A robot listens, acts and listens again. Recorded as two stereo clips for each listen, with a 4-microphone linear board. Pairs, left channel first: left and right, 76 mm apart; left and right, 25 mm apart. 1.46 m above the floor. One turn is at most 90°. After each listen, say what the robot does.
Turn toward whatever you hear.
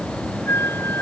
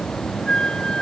Turn 30° left.
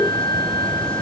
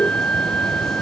Turn 90° left.
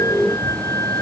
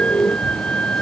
Turn 45° left.
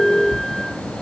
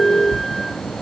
Keep listening.
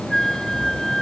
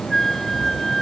Found it: a flute, straight ahead.